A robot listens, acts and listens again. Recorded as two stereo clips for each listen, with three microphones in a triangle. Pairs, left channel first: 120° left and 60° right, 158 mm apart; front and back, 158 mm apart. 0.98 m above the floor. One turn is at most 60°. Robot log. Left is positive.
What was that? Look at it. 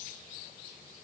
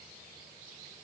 cmd idle
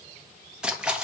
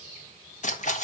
note: The splash: 25° left.
cmd yaw +25
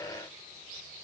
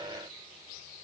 end: Facing where the splash came from. I can't hear it now.